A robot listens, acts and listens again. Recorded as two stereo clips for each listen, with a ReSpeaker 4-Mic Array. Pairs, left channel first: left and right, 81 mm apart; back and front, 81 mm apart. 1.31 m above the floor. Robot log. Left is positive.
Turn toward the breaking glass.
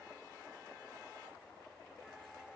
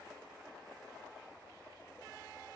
cmd idle
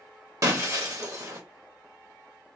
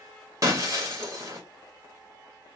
note: The breaking glass: 45° right.
cmd yaw -45
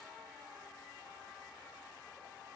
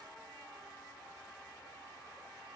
end: Facing where the breaking glass came from. I can't hear it now.